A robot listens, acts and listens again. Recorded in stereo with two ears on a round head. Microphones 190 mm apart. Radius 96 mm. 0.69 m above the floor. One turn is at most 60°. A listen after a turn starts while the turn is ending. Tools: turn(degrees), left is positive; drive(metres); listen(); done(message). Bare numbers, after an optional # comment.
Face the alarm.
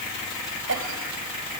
listen()
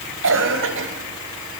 listen()
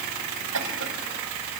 done("I can't make out an alarm to turn to.")